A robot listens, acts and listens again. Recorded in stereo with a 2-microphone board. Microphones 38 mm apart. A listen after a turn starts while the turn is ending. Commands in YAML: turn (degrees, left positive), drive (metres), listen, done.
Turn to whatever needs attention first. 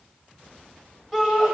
turn: 30
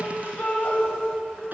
turn: 140
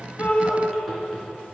turn: 10
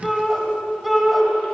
done: "Facing the shout."